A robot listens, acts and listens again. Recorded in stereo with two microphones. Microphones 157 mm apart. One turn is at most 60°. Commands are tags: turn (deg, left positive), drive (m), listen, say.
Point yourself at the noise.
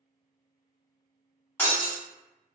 <turn deg="30"/>
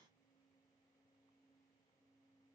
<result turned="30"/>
<listen/>
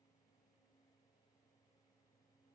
<say>I heard breaking glass, but can't make it out now. It was about 15° right or 135° left.</say>